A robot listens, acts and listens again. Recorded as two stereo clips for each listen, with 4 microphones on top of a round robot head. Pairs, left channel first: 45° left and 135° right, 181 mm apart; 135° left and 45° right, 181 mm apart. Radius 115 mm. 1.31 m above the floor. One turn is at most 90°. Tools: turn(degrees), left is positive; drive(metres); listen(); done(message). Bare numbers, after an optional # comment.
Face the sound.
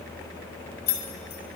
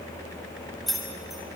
# The keys jangling: 45° left.
turn(45)
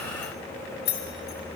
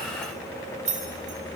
# The keys jangling is now 10° left.
turn(10)
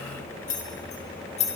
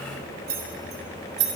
# The keys jangling is now 15° right.
turn(-15)
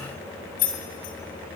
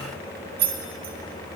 done("Found it: keys jangling, straight ahead.")